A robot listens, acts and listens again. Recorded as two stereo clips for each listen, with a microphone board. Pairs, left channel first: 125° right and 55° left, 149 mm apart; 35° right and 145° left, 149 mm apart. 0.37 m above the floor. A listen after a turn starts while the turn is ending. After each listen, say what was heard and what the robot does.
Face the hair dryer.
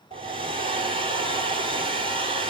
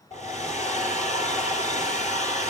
Found it: a hair dryer, straight ahead.